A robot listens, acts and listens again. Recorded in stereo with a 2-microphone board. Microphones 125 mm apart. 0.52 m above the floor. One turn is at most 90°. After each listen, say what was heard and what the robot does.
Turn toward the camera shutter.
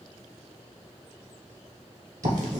Keep listening.
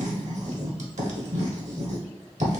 Keep listening.
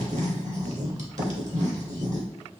I can't make out a camera shutter to turn to.